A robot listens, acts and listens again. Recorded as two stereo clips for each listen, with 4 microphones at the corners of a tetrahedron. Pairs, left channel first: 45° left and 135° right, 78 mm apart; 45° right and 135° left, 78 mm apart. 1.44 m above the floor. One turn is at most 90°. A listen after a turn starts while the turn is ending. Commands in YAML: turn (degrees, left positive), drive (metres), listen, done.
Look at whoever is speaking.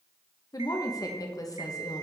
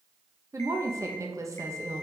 turn: 85
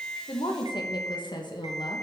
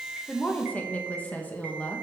turn: 25
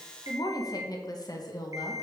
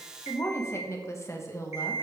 turn: 10
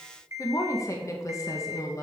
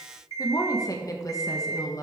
done: "Found it: a woman speaking, straight ahead, 1 to 2 m away."